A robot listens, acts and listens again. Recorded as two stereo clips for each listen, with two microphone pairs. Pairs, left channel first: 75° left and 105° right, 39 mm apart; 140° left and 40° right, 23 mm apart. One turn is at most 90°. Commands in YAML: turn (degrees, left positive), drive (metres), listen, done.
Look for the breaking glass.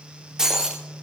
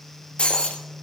turn: 90
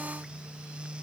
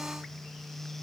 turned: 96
turn: 85
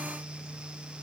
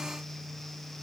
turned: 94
turn: -10
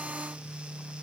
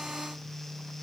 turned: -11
done: "Facing where the breaking glass came from. I can't hear it now."